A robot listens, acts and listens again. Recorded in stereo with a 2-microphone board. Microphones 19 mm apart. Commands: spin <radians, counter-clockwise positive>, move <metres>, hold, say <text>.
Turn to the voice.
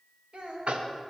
spin -1.22
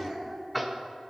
spin -0.61
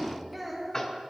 say Found it: a child speaking, straight ahead, 1 to 2 m away.